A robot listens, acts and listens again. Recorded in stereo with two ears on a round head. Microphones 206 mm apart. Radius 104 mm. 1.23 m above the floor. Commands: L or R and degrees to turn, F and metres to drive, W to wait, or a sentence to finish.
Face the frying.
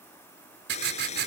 L30
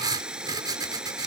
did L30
Found it: frying, straight ahead.